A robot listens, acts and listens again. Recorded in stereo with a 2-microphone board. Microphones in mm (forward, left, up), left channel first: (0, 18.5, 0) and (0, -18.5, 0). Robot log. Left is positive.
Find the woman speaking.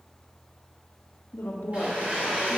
cmd yaw +90
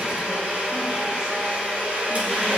cmd idle
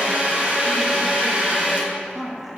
end: Found it: a woman speaking, straight ahead, 1 to 2 m away.